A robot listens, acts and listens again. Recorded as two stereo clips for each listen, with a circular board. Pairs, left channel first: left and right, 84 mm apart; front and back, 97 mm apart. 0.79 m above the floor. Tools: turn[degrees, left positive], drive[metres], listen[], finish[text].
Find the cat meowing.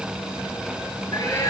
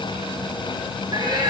Thought: The cat meowing: 135° left.
Action: turn[135]
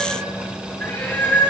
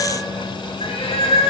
Thought: The cat meowing is now 20° left.
Action: turn[20]
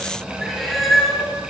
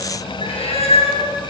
Action: finish[Found it: a cat meowing, straight ahead.]